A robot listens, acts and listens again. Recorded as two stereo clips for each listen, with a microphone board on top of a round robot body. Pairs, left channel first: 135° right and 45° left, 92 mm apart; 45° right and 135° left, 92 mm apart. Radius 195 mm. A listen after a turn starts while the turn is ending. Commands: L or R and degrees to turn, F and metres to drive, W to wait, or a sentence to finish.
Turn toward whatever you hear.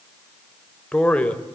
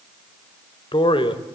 R60
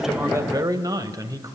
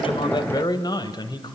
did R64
Found it: a man speaking, straight ahead.